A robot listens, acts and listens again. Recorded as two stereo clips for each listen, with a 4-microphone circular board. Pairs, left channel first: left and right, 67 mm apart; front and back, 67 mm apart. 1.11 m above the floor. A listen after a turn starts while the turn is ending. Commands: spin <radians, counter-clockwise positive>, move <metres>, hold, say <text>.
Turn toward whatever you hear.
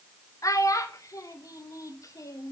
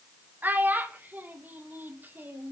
spin 2.09
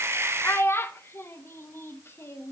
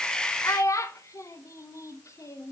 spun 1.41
spin 0.70
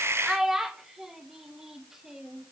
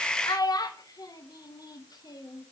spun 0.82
say Facing the child speaking.